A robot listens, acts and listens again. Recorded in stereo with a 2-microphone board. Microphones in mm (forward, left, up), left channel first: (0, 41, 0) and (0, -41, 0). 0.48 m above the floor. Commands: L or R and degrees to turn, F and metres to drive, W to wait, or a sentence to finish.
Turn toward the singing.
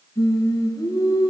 L45
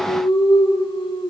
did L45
L95
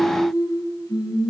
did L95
L50
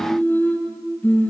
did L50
L20
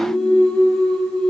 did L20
Facing the singing.